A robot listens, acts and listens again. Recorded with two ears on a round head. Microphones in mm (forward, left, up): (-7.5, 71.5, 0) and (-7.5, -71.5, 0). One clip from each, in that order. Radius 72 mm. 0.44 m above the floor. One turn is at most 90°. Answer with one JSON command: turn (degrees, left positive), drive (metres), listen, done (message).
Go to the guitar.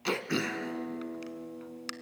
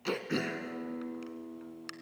{"turn": -70}
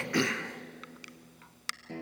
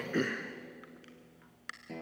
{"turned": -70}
{"drive": 1.0}
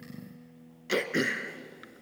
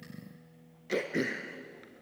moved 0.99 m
{"drive": 1.0}
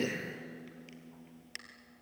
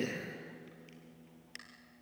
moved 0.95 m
{"drive": 1.0}
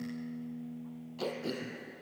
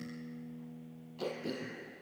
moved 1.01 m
{"turn": 10}
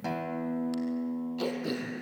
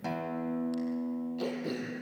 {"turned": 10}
{"drive": 1.0}
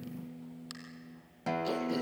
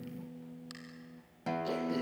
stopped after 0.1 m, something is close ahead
{"done": "I am next to the guitar."}